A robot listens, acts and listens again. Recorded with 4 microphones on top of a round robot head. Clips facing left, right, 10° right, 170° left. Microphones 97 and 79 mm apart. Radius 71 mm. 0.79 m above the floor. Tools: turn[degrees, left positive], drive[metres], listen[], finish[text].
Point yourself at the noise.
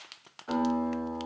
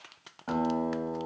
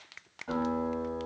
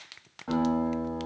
Thought: The guitar: 125° right.
Action: turn[-125]
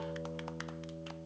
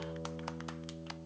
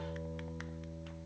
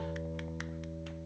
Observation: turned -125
Thought: The guitar is now 15° left.
Action: turn[15]
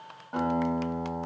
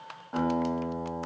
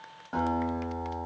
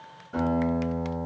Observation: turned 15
Action: finish[Found it: a guitar, straight ahead.]